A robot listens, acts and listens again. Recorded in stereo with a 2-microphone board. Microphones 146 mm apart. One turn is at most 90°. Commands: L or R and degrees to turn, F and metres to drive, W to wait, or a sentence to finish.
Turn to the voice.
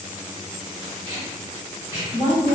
L30
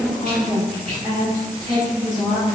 R30
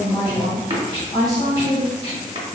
Facing the woman speaking.